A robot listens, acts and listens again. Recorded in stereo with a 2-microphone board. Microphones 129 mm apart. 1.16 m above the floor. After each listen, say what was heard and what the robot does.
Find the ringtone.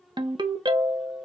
The ringtone: about 35° right or 145° right. Turn 35° right.
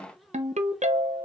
So it is at 115° right. Turn 115° right.
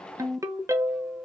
The ringtone is now 25° right. Turn 25° right.
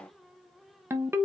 The ringtone is now 20° right. Turn 20° right.
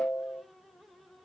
Facing the ringtone.